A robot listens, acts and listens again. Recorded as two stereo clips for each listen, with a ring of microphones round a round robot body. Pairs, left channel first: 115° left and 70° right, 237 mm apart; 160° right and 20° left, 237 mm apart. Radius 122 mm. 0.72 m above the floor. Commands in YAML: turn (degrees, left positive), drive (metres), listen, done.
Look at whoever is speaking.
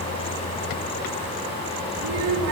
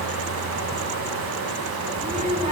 turn: -40
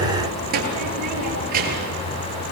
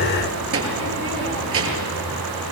turn: -10
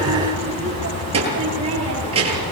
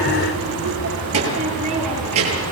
done: "Facing the child speaking, over 4 m away."